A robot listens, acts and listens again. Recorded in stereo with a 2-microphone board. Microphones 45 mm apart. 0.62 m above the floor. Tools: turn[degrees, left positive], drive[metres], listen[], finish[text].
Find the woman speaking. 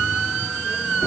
Action: listen[]
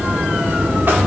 Action: listen[]
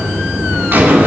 Action: finish[I can't make out a woman speaking, only a buzzer.]